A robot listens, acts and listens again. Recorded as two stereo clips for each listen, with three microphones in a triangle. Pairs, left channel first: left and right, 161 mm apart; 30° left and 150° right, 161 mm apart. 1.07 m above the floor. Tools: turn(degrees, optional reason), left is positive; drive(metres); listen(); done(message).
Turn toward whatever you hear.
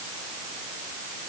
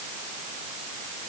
listen()
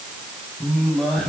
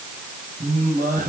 turn(degrees=175, reason="The singing: 175° left.")
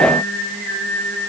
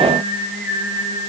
turn(degrees=15, reason="The singing is now 15° left.")
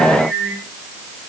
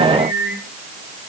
done("Facing the singing, over 4 m away.")